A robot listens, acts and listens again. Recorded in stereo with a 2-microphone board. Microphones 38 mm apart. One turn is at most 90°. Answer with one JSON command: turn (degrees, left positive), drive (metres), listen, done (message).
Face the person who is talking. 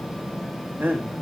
{"turn": -70}
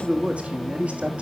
{"turn": -35}
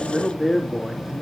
{"done": "Facing the man speaking."}